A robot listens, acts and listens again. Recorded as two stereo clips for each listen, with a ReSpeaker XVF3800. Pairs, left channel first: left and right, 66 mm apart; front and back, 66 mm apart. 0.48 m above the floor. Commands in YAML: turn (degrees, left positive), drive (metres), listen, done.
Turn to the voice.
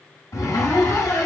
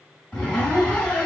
listen: true
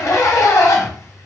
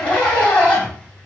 listen: true
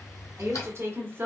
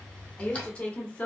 turn: -60
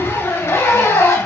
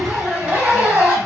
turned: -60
listen: true
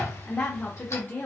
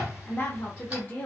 turn: 50
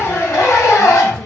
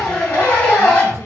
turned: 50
listen: true
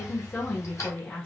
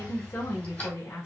turn: 15
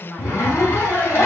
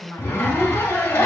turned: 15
done: "Found it: a woman speaking, straight ahead."